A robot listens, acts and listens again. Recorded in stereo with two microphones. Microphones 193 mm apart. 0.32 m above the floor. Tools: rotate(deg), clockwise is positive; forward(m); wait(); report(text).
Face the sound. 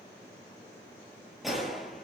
rotate(-30)
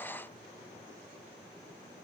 wait()
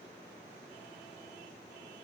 report("I heard a gunshot, but can't make it out now. It was about 30° right or 150° left.")